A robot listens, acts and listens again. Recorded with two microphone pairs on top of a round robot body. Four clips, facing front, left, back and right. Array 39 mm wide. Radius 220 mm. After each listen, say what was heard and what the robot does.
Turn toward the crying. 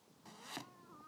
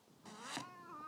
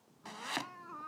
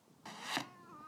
The crying: 175° left. Turn 175° left.
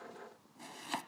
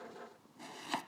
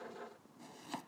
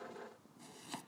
Keep listening.
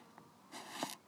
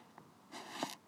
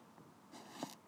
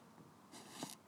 Keep listening.
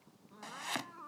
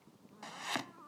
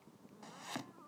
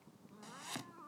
Found it: crying, straight ahead.